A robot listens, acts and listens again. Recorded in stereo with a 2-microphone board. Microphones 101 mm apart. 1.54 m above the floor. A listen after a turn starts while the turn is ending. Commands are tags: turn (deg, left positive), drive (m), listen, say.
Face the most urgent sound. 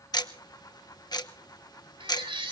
<turn deg="-60"/>
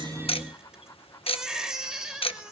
<say>Found it: a baby crying, straight ahead.</say>